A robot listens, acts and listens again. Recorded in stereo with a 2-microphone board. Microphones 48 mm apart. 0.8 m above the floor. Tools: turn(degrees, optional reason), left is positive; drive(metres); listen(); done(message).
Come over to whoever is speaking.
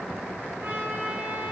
listen()
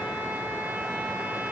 listen()
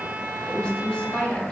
turn(degrees=20, reason="The woman speaking: about 20° left or 160° left.")
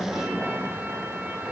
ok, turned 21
listen()
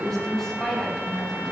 drive(metres=1.0)
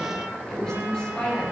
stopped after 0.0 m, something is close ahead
turn(degrees=10, reason="The woman speaking is now 10° left.")
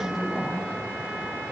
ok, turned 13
done("Blocked. The woman speaking is further on, straight ahead.")